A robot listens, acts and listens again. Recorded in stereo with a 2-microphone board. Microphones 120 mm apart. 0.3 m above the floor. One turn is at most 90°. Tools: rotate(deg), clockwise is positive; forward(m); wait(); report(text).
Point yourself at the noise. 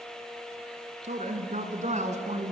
rotate(70)
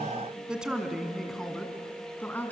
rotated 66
rotate(-15)
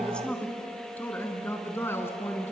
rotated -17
rotate(-15)
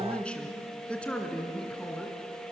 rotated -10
rotate(-10)
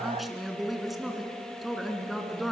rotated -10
report("Found it: a woman speaking, straight ahead, 2 to 4 m away.")